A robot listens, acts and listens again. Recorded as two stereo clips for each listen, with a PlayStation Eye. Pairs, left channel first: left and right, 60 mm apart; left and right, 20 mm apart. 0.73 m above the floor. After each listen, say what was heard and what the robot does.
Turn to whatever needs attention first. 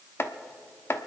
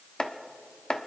Keep listening.
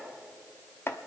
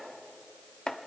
Keep listening.
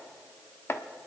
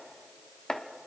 I can't make out anything urgent, only chopping.